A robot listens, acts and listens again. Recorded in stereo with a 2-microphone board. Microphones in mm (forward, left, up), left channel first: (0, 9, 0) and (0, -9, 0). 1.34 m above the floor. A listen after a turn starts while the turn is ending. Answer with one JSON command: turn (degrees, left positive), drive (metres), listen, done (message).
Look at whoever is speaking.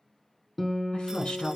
{"turn": 90}
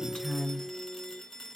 {"done": "Facing the woman speaking, over 4 m away."}